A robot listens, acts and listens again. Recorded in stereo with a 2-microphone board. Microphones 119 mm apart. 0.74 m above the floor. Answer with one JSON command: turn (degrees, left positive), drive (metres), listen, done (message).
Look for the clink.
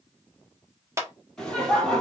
{"listen": true}
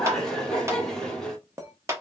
{"turn": -25}
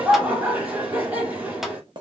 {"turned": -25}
{"turn": -130}
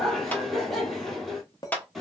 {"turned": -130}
{"turn": 40}
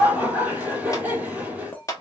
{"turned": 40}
{"turn": 20}
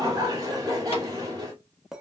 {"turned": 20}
{"done": "Facing the clink, under 1 m away."}